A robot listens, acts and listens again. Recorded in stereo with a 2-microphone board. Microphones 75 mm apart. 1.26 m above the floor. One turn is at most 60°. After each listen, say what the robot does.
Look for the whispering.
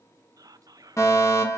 Turn 55° right.
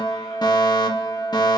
Keep listening.
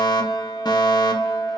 Keep listening.
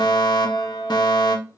I heard whispering, but can't make it out now. It was about straight ahead or 70° right.